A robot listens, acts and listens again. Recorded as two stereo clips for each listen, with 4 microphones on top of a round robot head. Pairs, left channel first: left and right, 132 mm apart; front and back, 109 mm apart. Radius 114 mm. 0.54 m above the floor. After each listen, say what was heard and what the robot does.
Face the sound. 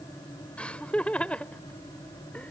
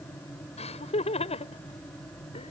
The laughter: 10° left. Turn 10° left.
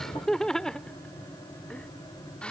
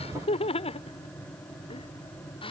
The laughter is now 10° left. Turn 10° left.
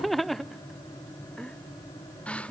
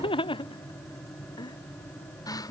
The laughter is now 15° left. Turn 15° left.
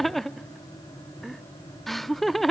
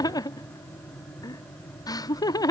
Facing the laughter.